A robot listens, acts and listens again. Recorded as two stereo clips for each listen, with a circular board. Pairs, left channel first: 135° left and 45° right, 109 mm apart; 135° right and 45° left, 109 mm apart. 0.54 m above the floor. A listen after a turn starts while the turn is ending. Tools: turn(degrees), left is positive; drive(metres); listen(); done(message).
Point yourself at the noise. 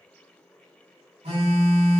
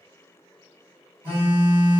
turn(degrees=-30)
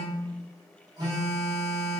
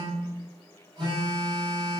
done("Facing the phone buzzing.")